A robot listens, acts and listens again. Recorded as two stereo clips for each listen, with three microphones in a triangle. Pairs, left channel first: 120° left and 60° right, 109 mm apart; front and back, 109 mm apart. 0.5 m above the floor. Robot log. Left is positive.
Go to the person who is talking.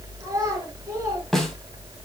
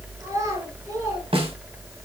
note: The child speaking: 120° right.
cmd yaw -120
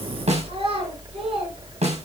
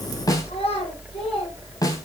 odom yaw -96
note: The child speaking is now 25° right.
cmd yaw -25
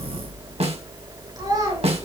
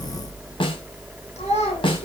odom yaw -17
cmd fwd 1.0
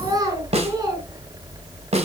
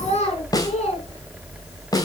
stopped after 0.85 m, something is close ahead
end: Something is in my way. I am facing the child speaking but have not reached it.